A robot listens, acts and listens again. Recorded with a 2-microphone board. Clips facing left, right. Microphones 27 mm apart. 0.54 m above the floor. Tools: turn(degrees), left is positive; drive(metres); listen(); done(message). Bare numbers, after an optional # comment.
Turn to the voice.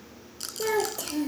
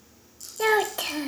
# The child speaking: about 55° right or 125° right.
turn(-55)
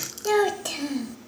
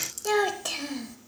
done("Facing the child speaking, 1 to 2 m away.")